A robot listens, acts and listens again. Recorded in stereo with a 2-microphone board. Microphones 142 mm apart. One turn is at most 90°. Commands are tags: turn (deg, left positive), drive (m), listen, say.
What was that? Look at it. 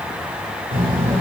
<turn deg="-90"/>
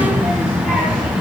<turn deg="-10"/>
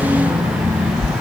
<say>Facing the child speaking.</say>